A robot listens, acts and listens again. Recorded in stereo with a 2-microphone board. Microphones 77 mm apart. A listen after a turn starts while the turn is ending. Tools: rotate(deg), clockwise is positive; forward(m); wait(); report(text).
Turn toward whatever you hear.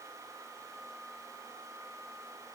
wait()
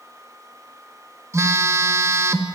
rotate(40)
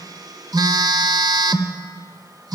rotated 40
rotate(90)
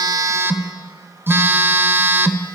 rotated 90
rotate(35)
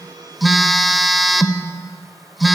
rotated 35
report("Found it: a phone buzzing, straight ahead, 1 to 2 m away.")